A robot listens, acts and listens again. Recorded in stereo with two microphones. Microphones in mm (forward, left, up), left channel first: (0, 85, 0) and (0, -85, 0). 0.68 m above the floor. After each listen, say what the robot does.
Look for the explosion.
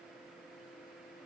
Keep listening.
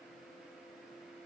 Keep listening.
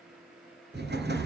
Turn 90° right.
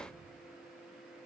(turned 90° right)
Facing where the explosion came from. I can't hear it now.